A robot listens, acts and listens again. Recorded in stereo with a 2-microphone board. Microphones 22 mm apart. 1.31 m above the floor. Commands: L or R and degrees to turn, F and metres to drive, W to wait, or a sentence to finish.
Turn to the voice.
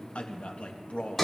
L60
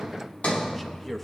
Facing the man speaking.